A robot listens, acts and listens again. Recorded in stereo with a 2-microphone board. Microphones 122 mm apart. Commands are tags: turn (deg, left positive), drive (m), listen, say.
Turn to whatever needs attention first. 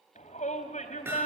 <turn deg="75"/>
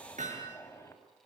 <listen/>
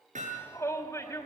<turn deg="20"/>
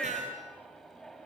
<say>Facing the shout, over 4 m away.</say>